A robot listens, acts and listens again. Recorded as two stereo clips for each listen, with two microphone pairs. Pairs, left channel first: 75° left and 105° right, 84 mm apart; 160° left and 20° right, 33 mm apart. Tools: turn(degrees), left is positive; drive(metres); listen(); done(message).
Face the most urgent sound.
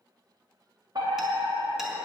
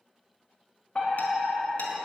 turn(degrees=-135)
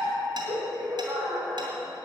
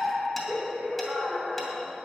turn(degrees=-50)
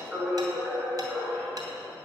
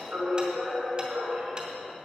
turn(degrees=-15)
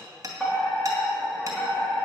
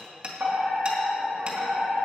done("Facing the fire alarm, over 4 m away.")